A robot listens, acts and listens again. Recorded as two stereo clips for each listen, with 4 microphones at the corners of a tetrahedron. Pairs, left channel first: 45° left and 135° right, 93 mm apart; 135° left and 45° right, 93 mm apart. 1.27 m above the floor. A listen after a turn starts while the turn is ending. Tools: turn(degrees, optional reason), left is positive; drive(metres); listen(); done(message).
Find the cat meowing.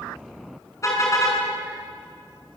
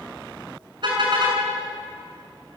listen()
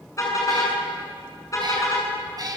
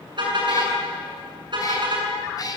turn(degrees=180, reason="The cat meowing: straight behind.")
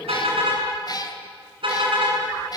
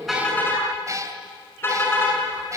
done("Facing the cat meowing, 2 to 4 m away.")